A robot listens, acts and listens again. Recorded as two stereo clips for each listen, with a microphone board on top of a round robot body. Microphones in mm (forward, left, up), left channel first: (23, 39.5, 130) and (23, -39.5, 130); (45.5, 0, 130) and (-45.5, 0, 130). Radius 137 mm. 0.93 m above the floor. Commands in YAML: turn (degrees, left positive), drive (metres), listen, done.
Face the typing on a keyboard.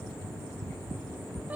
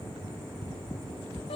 listen: true
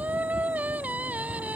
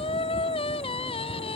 listen: true
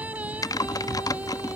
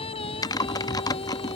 turn: 50
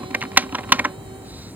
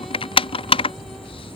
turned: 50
turn: -20
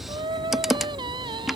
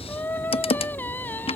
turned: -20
done: "Found it: typing on a keyboard, straight ahead."